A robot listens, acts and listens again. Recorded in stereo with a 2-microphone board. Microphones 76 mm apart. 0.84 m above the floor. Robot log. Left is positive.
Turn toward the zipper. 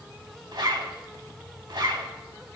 note: The zipper: about 75° right or 105° right.
cmd yaw -75
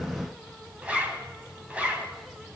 note: So it is at 20° right.
cmd yaw -20
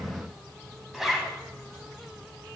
end: Found it: a zipper, straight ahead, 1 to 2 m away.